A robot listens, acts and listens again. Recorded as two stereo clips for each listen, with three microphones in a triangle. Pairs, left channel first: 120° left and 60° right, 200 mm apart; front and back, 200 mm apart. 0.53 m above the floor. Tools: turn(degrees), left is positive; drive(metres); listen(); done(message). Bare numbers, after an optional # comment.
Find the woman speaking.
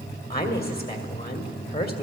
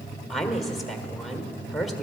# The woman speaking: 90° left.
turn(90)
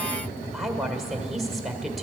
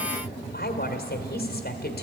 # The woman speaking is now 30° left.
turn(30)
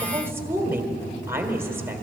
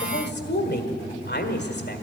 # The woman speaking is now 15° left.
turn(15)
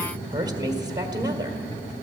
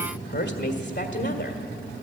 done("Found it: a woman speaking, straight ahead, 1 to 2 m away.")